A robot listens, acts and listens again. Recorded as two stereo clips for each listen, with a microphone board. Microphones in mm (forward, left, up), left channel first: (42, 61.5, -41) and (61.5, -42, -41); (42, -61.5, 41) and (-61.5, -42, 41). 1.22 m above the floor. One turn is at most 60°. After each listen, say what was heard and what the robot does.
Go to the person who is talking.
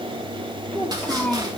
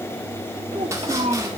The child speaking: straight behind. Turn 60° left.
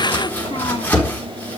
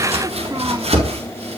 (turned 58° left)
Nothing new. It was at 120° left. Turn 60° left.
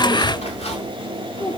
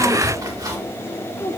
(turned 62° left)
The child speaking is now 60° left. Turn 60° left.
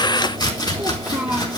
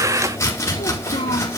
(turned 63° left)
Drive 1.0 m forward.
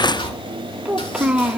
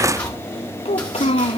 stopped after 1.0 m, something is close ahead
Arrived at the child speaking, straight ahead.